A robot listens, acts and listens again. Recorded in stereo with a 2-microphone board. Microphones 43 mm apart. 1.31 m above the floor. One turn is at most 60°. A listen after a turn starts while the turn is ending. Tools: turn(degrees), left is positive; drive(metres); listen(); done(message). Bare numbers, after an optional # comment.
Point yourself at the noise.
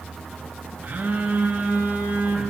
# The phone buzzing: about 40° right or 140° right.
turn(-40)
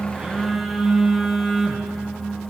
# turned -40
done("Facing the phone buzzing, under 1 m away.")